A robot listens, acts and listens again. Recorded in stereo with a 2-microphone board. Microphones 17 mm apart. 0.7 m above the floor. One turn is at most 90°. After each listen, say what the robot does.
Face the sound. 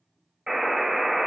Turn 45° right.
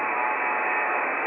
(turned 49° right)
Turn 80° right.
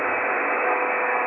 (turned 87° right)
Found it: a buzzer, straight ahead, under 1 m away.